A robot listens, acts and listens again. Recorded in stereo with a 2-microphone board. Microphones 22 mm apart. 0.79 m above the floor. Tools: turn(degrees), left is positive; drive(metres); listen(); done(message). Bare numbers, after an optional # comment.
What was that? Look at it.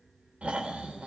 # The snoring: about 75° right or 105° right.
turn(-75)
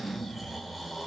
# So it is at 10° right.
turn(-10)
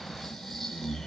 done("Facing the snoring, 2 to 4 m away.")